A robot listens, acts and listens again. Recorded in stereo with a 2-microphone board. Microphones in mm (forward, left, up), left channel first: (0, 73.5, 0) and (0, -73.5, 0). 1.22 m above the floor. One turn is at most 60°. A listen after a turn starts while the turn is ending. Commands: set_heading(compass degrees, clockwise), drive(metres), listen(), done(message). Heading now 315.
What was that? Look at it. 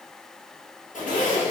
set_heading(255)
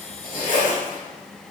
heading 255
set_heading(195)
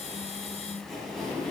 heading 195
done("Facing the zipper, 1 to 2 m away.")